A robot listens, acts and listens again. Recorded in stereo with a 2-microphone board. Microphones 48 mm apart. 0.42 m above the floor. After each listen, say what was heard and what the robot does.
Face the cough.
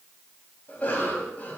The cough: about 30° left or 150° left. Turn 30° left.
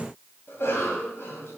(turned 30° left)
So it is at 115° left. Turn 115° left.
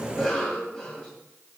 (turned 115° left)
The cough is now 15° left. Turn 15° left.
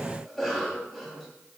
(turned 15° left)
Facing the cough, 2 to 4 m away.